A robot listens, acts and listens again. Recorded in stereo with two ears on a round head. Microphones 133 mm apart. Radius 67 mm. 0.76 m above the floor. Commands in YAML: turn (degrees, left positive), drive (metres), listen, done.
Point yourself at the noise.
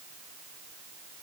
listen: true
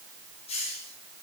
turn: 40
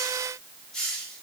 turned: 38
done: "Found it: a hiss, straight ahead, over 4 m away."